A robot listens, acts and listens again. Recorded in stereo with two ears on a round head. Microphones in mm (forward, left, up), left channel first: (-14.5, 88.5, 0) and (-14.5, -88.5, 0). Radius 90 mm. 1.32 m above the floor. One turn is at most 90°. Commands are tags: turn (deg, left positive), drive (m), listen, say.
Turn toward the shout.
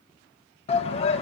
<turn deg="30"/>
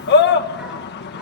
<turn deg="90"/>
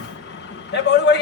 <turn deg="55"/>
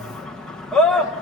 <say>Found it: a shout, straight ahead.</say>